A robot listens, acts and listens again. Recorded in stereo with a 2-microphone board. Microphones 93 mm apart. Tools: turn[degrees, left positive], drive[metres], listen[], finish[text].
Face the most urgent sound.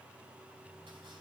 Action: listen[]
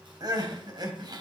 Thought: The crying: about 50° right or 130° right.
Action: turn[-50]
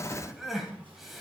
Action: finish[Facing the crying.]